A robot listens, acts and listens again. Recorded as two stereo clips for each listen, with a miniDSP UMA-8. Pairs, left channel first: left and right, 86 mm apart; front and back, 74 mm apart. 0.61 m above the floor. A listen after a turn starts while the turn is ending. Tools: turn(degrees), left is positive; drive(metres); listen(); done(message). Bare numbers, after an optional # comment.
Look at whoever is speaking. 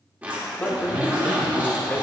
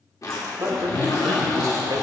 # The man speaking: 150° left.
turn(150)
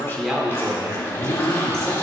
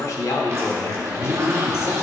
# The man speaking is now 45° right.
turn(-45)
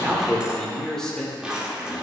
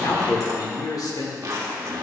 done("Facing the man speaking.")